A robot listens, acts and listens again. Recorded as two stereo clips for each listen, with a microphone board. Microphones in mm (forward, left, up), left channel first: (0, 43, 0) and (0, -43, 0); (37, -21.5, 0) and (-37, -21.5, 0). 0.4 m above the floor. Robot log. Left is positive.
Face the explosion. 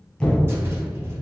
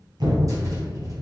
note: The explosion: 170° left.
cmd yaw +170
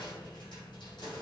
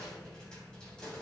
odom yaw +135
note: Nothing new. It was at 35° left.
cmd yaw +35
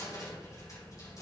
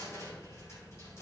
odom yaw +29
end: Facing where the explosion came from. I can't hear it now.